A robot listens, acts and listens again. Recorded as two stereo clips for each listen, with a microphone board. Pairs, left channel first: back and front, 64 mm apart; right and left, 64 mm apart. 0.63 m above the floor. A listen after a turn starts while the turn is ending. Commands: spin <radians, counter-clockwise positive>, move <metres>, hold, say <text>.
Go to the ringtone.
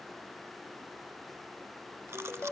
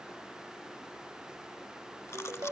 spin 2.09
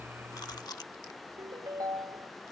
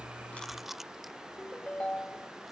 spin -0.35
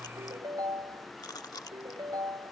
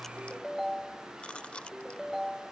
move 1.0
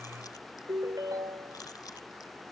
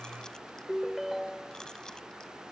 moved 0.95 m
move 1.0
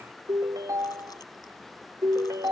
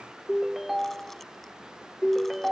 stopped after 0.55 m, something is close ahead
say I am next to the ringtone.